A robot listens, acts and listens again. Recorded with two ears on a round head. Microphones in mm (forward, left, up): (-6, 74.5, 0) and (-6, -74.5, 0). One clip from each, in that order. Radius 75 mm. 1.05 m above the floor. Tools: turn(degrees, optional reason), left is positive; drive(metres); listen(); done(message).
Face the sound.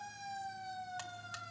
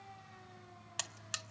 turn(degrees=-60, reason="The buzzer: about 60° right or 120° right.")
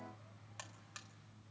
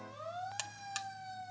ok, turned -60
turn(degrees=-60, reason="So it is at 60° right.")
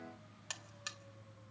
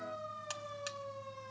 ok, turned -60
done("Facing the buzzer, under 1 m away.")